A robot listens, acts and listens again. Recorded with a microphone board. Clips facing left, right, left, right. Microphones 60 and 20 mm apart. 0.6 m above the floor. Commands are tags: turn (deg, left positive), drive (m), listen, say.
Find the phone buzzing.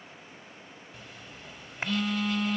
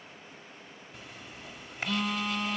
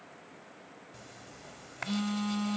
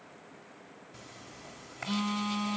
<turn deg="30"/>
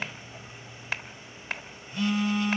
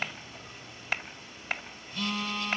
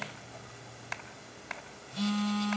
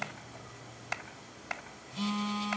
<turn deg="155"/>
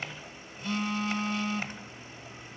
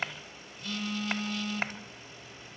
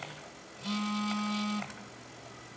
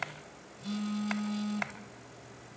<turn deg="25"/>
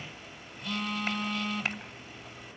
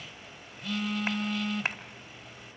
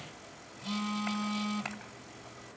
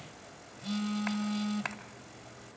<say>Facing the phone buzzing.</say>